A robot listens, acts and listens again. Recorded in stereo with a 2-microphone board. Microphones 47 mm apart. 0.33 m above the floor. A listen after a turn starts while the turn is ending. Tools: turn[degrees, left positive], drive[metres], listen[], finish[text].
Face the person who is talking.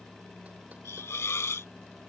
Action: listen[]
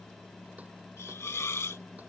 Action: listen[]
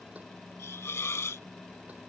Action: finish[I can't make out anyone speaking to turn to.]